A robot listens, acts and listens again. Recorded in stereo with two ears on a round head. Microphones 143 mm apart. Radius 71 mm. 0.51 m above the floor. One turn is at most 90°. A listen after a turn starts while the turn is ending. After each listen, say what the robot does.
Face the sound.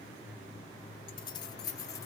Turn 20° left.
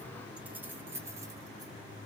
Turn 15° right.
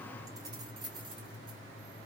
Turn 30° right.
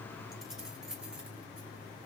Keep listening.
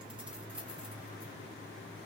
Keep listening.
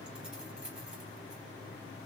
Facing where the keys jangling came from. I can't hear it now.